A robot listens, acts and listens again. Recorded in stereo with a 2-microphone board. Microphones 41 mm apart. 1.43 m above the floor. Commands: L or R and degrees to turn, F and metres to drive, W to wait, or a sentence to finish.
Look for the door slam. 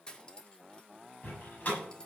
L40
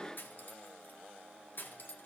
W
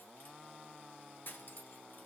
I heard a door slam, but can't make it out now. It was about straight ahead or 100° left.